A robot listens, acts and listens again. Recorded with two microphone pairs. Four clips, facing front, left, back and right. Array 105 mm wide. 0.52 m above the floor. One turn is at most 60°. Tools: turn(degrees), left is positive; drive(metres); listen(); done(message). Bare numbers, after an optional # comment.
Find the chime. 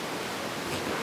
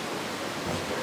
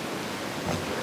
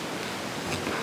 listen()
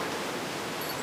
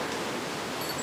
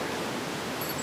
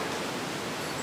listen()
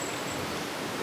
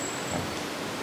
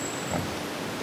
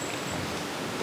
done("I can't make out a chime.")